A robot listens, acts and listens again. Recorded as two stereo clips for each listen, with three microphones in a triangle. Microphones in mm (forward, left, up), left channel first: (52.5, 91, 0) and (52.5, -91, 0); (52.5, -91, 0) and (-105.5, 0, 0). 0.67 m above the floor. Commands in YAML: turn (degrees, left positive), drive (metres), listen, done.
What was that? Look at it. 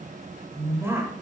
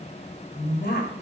turn: -15
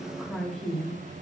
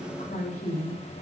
done: "Found it: a woman speaking, straight ahead, 2 to 4 m away."